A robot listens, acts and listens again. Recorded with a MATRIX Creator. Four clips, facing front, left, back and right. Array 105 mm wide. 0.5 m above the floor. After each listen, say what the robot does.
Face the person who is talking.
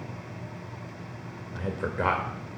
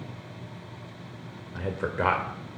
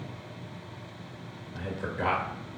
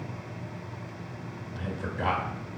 Turn 60° left.
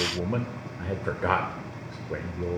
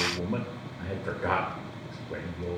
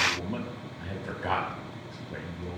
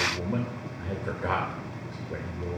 Facing the man speaking, 1 to 2 m away.